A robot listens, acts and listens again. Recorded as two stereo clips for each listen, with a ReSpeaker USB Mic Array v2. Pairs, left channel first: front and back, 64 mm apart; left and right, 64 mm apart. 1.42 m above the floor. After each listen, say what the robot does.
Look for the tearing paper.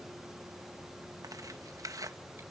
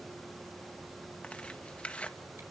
Turn 160° left.
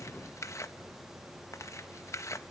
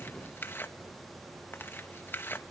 Turn 35° left.
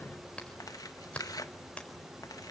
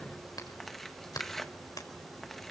Found it: tearing paper, straight ahead, 1 to 2 m away.